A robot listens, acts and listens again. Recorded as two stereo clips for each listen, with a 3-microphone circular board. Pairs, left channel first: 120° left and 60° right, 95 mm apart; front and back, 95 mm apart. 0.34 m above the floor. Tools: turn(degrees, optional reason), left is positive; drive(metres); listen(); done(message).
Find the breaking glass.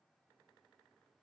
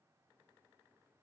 listen()
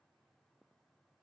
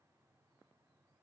listen()
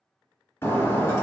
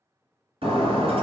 turn(degrees=-175, reason="The breaking glass: 175° right.")
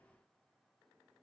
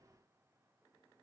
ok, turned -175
done("I heard breaking glass from this way, but can't make it out now.")